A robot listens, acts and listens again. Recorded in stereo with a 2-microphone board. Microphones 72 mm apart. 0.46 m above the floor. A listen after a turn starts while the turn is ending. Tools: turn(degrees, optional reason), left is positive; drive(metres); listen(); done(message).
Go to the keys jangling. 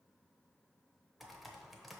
listen()
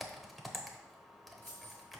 turn(degrees=30, reason="The keys jangling: about 30° left or 150° left.")
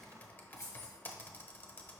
turn(degrees=120, reason="So it is at 120° left.")
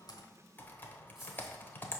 drive(metres=1.0)
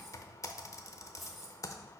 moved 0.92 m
drive(metres=1.0)
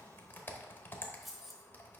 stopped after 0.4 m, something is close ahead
done("Arrived at the keys jangling, straight ahead.")